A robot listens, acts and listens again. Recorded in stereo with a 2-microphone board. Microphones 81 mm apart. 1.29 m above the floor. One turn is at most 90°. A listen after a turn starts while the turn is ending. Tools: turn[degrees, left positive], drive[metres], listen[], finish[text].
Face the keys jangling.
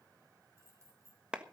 Thought: The keys jangling: about 40° right or 140° right.
Action: turn[-40]
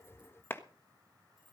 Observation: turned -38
Action: listen[]
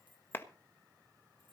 Thought: So it is at 95° right.
Action: turn[-90]
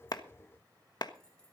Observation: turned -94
Action: listen[]
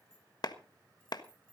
Thought: The keys jangling is now 15° left.
Action: turn[15]
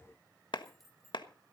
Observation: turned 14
Action: finish[Found it: keys jangling, straight ahead.]